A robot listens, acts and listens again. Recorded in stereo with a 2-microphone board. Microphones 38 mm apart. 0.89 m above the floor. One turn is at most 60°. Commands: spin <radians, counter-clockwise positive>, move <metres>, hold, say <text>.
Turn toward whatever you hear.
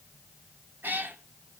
spin -1.05
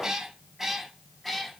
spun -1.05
say Found it: a cat meowing, straight ahead.